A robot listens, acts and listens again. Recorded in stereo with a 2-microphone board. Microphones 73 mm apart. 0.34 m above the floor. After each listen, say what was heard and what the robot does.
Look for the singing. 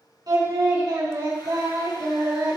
The singing: about 65° right or 115° right. Turn 65° right.
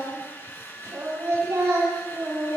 So it is at 45° right. Turn 45° right.
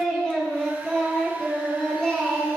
The singing is now 10° left. Turn 10° left.
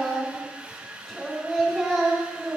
Found it: singing, straight ahead, over 4 m away.